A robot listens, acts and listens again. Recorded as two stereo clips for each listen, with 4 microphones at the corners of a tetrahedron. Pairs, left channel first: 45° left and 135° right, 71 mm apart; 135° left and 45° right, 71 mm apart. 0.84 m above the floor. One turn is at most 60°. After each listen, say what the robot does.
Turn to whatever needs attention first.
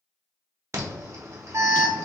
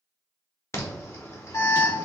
Turn 60° left.
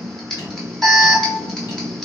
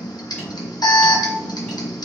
Turn 60° left.
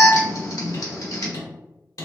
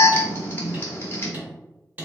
Turn 60° left.
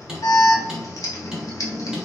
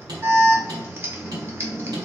Turn 10° left.
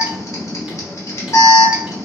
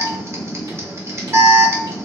Facing the alarm, under 1 m away.